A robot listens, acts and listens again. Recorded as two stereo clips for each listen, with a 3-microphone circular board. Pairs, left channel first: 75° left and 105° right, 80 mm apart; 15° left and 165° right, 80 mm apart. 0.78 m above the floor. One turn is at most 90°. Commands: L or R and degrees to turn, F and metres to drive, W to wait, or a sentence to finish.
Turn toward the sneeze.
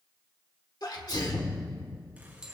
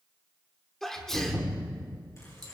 L90
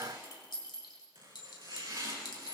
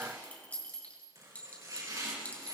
L10
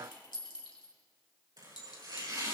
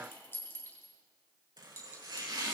Facing where the sneeze came from. I can't hear it now.